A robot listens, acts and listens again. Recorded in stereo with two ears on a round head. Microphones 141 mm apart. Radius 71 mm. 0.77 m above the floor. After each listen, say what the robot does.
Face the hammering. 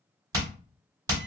Turn 25° right.
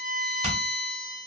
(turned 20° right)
Turn 135° right.
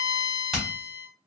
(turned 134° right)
Facing the hammering, 1 to 2 m away.